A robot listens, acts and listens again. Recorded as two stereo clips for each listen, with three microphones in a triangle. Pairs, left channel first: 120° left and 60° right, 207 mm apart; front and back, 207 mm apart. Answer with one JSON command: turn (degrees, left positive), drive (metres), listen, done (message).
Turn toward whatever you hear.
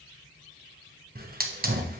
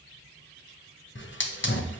{"turn": -20}
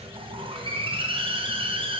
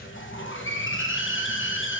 {"done": "Facing the hiss."}